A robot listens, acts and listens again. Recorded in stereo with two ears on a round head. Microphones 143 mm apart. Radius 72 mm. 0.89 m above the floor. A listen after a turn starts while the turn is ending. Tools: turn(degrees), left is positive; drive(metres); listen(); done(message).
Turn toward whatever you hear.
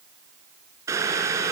turn(degrees=-20)
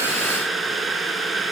done("Facing the boiling.")